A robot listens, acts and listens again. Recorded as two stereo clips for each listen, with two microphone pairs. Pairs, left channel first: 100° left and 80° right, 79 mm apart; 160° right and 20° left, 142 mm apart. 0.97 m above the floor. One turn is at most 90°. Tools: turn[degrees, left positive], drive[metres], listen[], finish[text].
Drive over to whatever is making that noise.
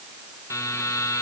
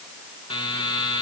Thought: The buzzer: 145° left.
Action: turn[90]
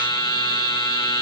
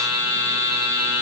Thought: The buzzer is now 85° left.
Action: turn[85]
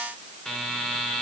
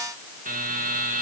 Thought: The buzzer is now 20° left.
Action: turn[20]
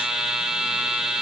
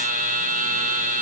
Action: drive[1.0]
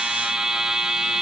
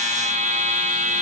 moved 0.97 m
Action: drive[1.0]
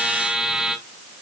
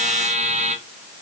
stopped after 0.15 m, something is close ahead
Action: finish[Arrived at the buzzer, straight ahead.]